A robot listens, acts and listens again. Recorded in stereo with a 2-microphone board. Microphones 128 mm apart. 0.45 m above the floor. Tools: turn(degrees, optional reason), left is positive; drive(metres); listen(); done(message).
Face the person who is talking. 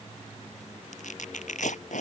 listen()
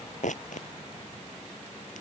listen()
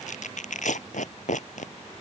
done("I can't make out anyone speaking, only tearing paper.")